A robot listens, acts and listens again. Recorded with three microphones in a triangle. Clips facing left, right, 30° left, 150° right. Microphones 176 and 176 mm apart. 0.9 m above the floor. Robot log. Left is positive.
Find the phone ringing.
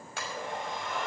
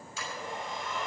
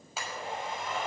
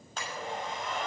cmd idle
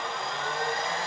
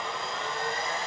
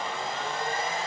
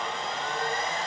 cmd idle
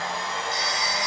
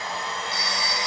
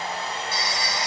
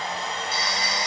note: The phone ringing: 115° right.
cmd yaw -115
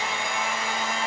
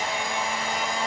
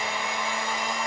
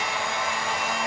cmd idle
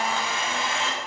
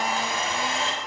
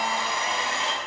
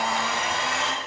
cmd idle
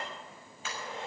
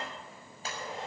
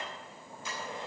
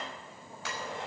end: Facing where the phone ringing came from. I can't hear it now.